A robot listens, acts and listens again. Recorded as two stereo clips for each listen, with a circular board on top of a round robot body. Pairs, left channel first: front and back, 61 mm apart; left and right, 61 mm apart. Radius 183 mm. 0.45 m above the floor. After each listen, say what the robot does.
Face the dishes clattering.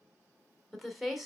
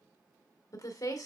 Keep listening.
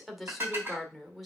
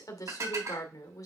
Turn 125° right.
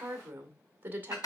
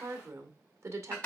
Turn 20° left.
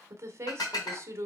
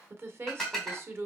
Turn 10° left.
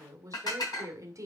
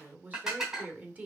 Facing the dishes clattering.